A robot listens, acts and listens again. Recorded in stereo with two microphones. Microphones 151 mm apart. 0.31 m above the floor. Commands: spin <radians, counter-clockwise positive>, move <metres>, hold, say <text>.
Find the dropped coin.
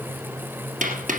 spin -1.05
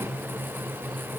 hold
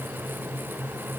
say I heard a dropped coin, but can't make it out now. It was about straight ahead or 60° right.